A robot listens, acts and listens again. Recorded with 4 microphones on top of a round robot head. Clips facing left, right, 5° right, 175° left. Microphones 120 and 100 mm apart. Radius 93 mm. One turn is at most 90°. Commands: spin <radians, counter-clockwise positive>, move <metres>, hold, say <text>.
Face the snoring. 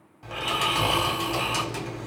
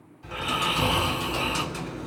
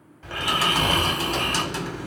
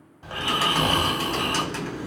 spin 1.57
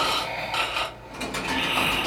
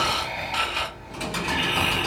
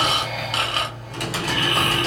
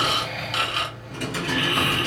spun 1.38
spin 0.44
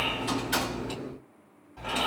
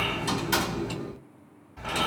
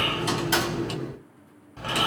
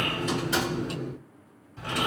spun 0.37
say Found it: snoring, straight ahead.